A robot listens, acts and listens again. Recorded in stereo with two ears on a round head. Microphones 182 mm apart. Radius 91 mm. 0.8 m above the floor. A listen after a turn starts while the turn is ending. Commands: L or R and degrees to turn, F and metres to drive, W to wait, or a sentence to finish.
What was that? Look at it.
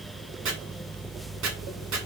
R90
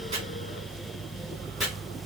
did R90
Found it: chopping, straight ahead, 1 to 2 m away.